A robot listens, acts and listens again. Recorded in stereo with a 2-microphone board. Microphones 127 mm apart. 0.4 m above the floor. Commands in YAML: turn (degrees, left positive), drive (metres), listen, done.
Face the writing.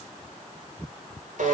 listen: true
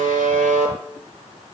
listen: true
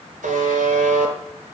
done: "I can't make out writing, only a buzzer."